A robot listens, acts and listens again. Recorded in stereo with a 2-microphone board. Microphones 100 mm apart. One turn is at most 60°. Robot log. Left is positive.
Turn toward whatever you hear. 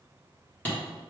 note: The hammering: about 20° left or 160° left.
cmd yaw +20
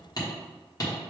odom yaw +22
note: So it is at 140° left.
cmd yaw +60
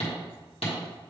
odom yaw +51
note: The hammering is now 90° left.
cmd yaw +60
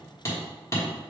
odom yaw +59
note: The hammering is now 30° left.
cmd yaw +30
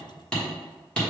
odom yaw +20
note: The hammering is now 10° left.
cmd yaw +10
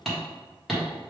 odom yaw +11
end: Found it: hammering, straight ahead, 1 to 2 m away.